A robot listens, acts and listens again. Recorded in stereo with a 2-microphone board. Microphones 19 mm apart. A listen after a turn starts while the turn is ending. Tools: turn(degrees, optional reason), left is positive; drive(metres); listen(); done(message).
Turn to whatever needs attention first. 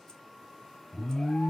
turn(degrees=40, reason="The alarm: about 40° left or 140° left.")
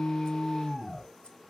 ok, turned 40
done("Facing the alarm, under 1 m away.")